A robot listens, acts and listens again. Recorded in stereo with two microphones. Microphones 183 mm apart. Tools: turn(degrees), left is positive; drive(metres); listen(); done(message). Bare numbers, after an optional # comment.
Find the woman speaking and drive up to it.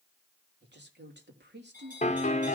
# The woman speaking: about 75° right or 105° right.
turn(-75)
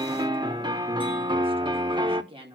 # So it is at 30° right.
turn(-30)
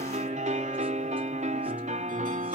listen()
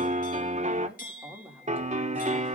drive(1.0)
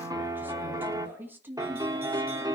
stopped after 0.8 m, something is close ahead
# The woman speaking is now 10° right.
turn(-10)
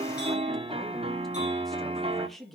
done("Something is in my way. I am facing the woman speaking but have not reached it.")